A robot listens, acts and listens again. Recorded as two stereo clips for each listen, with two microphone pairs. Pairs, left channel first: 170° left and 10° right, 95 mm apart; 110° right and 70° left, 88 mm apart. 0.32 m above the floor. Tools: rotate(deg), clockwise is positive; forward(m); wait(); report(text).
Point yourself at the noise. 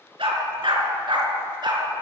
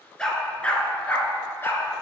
rotate(45)
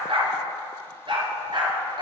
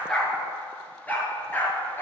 rotate(45)
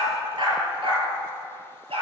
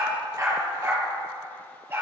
rotate(-10)
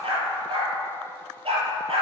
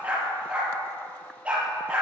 report("Found it: a dog barking, straight ahead, 2 to 4 m away.")